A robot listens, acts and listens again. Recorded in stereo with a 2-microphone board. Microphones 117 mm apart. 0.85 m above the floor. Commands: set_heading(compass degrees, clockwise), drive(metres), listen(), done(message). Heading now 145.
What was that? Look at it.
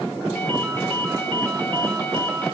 set_heading(130)
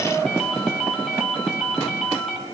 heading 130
done("Facing the ringtone.")